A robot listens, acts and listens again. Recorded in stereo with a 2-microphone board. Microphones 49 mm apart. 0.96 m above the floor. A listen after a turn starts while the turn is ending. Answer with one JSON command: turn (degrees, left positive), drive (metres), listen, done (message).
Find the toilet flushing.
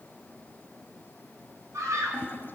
{"turn": 45}
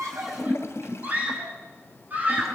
{"turn": 85}
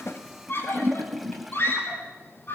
{"done": "Found it: a toilet flushing, straight ahead."}